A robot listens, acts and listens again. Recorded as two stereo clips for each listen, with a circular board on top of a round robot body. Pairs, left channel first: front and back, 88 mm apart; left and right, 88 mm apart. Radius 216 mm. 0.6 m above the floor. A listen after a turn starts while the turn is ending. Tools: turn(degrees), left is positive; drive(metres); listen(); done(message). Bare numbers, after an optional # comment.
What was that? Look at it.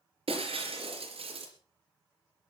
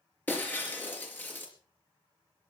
# The breaking glass: 165° left.
turn(165)
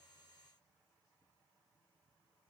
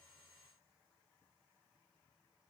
done("Facing where the breaking glass came from. I can't hear it now.")